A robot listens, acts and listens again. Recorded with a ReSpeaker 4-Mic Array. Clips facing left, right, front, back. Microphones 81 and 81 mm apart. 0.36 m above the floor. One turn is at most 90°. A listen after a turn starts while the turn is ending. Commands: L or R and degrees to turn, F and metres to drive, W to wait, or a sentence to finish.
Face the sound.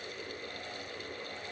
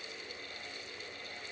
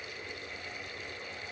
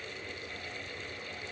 W
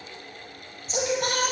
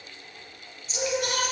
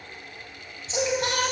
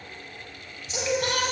L65
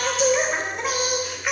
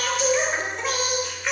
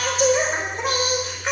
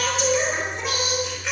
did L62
L10
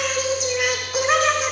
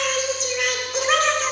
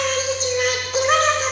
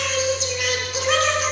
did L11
L15
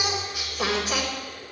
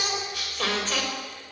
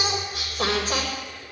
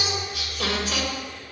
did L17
L20
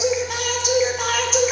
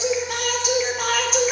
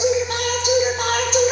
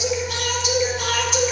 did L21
Facing the singing, 1 to 2 m away.